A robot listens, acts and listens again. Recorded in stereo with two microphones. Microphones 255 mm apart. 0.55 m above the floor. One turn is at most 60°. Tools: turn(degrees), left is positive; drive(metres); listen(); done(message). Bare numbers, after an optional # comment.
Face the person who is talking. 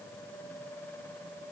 listen()
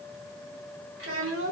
# The child speaking: about 55° right or 125° right.
turn(-55)
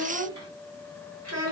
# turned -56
# So it is at 85° right.
turn(-60)
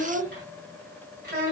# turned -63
# The child speaking is now 40° right.
turn(-40)
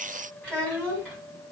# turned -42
done("Facing the child speaking.")